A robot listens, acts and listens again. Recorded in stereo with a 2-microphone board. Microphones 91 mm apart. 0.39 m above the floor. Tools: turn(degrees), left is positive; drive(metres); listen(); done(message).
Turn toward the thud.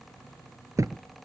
turn(degrees=-35)
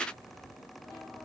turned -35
listen()
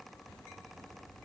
done("I heard a thud, but can't make it out now. It was about straight ahead or 110° right.")